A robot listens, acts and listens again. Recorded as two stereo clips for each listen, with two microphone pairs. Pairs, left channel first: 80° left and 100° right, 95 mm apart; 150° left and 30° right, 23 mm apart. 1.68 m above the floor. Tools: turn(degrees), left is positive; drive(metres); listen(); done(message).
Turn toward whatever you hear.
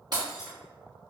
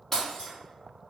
turn(degrees=-135)
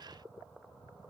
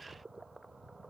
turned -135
done("I heard breaking glass from this way, but can't make it out now.")